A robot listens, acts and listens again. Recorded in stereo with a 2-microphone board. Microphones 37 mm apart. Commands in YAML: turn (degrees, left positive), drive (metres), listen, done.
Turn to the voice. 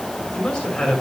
turn: 15
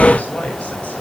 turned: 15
turn: 35
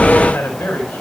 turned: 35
turn: 105
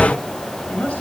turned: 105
turn: 50
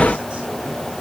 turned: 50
listen: true
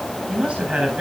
turn: -25
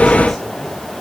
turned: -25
listen: true
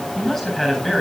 turn: 15
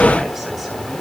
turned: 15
listen: true
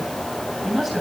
done: "Found it: a man speaking, straight ahead, over 4 m away."